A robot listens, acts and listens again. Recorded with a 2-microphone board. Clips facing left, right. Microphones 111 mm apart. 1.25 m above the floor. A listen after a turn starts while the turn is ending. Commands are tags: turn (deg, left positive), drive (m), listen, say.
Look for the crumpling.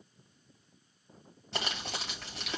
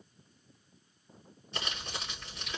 <turn deg="70"/>
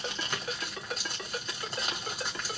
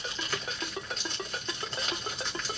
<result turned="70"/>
<turn deg="10"/>
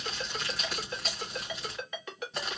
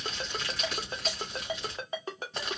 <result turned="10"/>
<say>Found it: crumpling, straight ahead.</say>